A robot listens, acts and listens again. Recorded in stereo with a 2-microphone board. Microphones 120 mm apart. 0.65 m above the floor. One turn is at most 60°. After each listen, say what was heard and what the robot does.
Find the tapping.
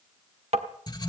The tapping: about 55° right or 125° right. Turn 55° right.
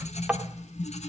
So it is at 10° right. Turn 10° right.
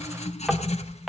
Facing the tapping, 1 to 2 m away.